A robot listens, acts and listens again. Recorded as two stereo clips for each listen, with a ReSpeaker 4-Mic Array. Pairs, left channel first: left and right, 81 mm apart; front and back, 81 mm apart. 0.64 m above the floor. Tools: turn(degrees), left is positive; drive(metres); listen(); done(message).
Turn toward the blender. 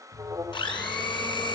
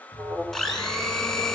turn(degrees=85)
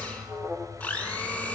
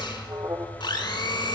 turn(degrees=20)
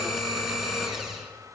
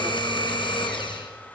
done("Facing the blender, over 4 m away.")